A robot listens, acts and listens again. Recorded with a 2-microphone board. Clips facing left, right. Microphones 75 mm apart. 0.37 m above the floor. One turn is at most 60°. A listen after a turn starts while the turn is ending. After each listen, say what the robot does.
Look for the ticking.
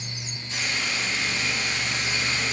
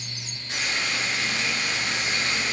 Keep listening.
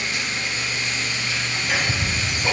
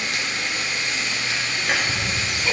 Turn 30° left.
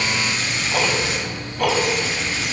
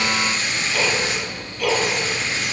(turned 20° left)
Turn 60° left.
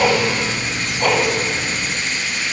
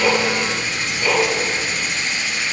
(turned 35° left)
Turn 60° left.
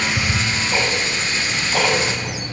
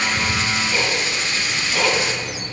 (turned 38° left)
Turn 55° left.
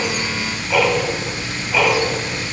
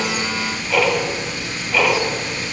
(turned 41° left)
Turn 10° left.
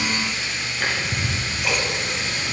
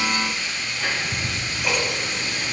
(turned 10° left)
Found it: ticking, straight ahead.